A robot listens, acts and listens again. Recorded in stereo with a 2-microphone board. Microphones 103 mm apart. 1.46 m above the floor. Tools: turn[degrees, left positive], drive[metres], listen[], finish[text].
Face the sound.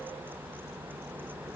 Action: listen[]
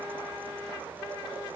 Action: listen[]
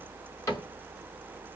Thought: The cupboard door: about 30° left or 150° left.
Action: turn[30]
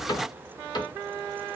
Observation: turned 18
Thought: So it is at 135° left.
Action: turn[135]
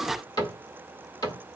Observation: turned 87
Thought: The cupboard door is now 45° left.
Action: turn[45]
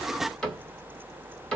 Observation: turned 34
Thought: The cupboard door is now 10° left.
Action: turn[10]
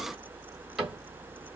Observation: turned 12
Action: finish[Facing the cupboard door.]